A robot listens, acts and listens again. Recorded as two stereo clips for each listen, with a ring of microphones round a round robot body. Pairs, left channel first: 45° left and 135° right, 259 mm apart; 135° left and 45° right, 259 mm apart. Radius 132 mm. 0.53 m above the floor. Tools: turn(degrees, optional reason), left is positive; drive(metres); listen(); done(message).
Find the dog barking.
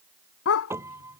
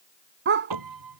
done("Facing the dog barking.")